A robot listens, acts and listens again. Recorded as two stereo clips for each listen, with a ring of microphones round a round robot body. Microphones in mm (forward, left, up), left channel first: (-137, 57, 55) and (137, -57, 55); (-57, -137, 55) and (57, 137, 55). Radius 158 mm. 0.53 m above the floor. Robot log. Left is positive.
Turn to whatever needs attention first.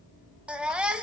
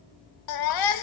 note: The baby crying: 110° right.
cmd yaw -110
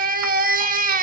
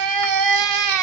note: The baby crying is now 40° left.
cmd yaw +40
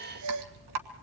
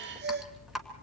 note: The baby crying is now 10° left.
cmd yaw +10
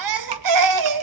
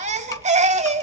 end: Found it: a baby crying, straight ahead.